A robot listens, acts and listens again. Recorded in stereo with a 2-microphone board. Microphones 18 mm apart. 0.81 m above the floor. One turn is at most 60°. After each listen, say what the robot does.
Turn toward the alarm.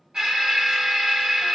Turn 55° right.
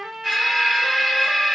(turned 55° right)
Turn 10° right.
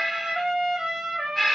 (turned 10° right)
Found it: an alarm, straight ahead, 1 to 2 m away.